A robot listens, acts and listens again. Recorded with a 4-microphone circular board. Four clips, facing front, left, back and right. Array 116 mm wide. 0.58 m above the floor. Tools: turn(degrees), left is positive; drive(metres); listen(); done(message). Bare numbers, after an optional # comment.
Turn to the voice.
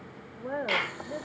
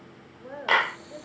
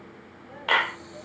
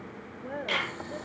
done("Found it: a woman speaking, straight ahead, 2 to 4 m away.")